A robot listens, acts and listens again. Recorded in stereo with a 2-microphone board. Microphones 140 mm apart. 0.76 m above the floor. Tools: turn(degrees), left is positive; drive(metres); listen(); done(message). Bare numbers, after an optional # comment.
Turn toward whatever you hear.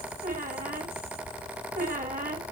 # The squeak: about 70° right or 110° right.
turn(-70)
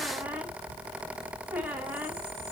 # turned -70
listen()
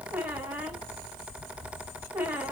# So it is at 15° right.
turn(-15)
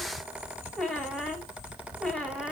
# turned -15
done("Found it: a squeak, straight ahead.")